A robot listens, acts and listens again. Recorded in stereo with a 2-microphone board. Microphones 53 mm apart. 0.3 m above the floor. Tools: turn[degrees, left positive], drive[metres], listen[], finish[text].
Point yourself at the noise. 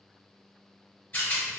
Thought: The rattle: about 35° left or 145° left.
Action: turn[35]
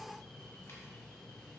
Action: listen[]
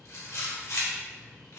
Thought: So it is at 105° left.
Action: turn[105]
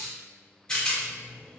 Thought: The rattle is now 20° left.
Action: turn[20]
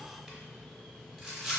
Action: finish[Facing the rattle.]